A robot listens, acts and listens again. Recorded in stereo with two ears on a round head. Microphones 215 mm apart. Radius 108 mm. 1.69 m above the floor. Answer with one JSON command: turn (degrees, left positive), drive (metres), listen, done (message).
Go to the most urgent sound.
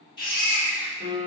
{"turn": 20}
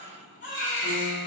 {"turn": 140}
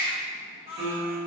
{"turn": 30}
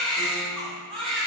{"drive": 1.0}
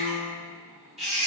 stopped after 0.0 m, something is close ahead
{"done": "Something is in my way. I am facing the baby crying but have not reached it."}